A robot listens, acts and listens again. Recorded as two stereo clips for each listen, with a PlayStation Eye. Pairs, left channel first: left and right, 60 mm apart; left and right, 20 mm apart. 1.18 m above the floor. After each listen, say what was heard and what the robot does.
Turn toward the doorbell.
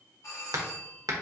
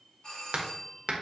The doorbell: about 60° left or 120° left. Turn 60° left.
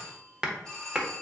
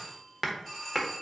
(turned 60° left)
So it is at 15° left. Turn 15° left.
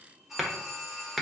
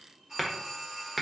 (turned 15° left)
Facing the doorbell.